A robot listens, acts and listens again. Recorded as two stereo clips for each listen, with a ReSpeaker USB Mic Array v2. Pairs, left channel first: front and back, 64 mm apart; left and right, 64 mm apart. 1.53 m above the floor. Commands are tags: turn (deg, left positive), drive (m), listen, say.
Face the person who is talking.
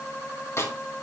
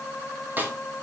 <listen/>
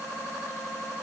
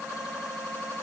<listen/>
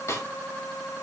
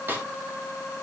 <say>I can't make out anyone speaking to turn to.</say>